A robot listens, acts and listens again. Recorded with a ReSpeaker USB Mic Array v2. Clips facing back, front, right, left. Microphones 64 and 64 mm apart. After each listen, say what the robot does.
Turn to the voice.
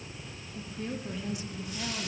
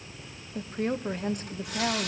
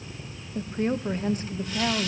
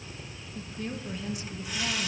Turn 40° right.
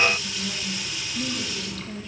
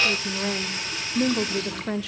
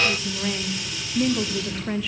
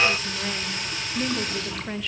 Found it: a woman speaking, straight ahead.